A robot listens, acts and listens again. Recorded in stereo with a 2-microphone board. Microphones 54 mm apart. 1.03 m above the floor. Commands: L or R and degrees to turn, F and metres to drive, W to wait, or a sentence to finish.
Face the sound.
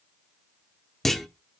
L30
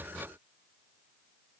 W
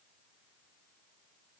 I heard a clunk, but can't make it out now. It was about 25° right or 145° left.